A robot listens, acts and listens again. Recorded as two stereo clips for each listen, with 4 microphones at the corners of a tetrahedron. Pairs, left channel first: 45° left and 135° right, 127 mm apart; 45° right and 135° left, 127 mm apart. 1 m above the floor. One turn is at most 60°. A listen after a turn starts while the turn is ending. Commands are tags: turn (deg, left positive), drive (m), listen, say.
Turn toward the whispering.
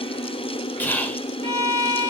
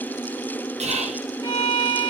<turn deg="60"/>
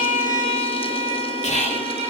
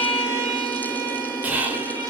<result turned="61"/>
<turn deg="60"/>
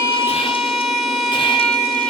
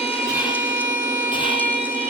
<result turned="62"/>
<listen/>
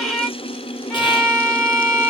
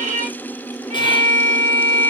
<listen/>
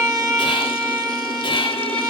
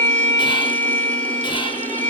<say>Facing where the whispering came from. I can't hear it now.</say>